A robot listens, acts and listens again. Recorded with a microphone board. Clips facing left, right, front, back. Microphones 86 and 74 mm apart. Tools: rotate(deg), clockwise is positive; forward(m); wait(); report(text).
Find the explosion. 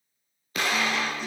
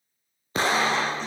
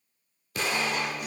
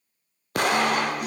rotate(150)
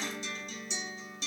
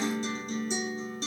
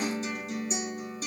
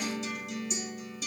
report("I heard an explosion from this way, but can't make it out now.")